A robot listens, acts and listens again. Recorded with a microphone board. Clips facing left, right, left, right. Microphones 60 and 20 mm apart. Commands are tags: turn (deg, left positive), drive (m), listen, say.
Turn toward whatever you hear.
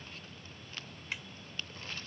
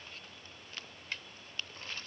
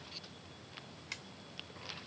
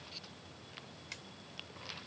<turn deg="30"/>
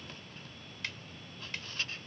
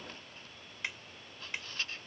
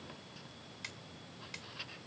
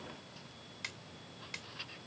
<turn deg="-15"/>
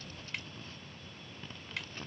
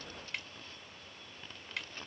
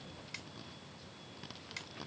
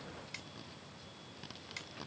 <say>Found it: a snare drum, straight ahead.</say>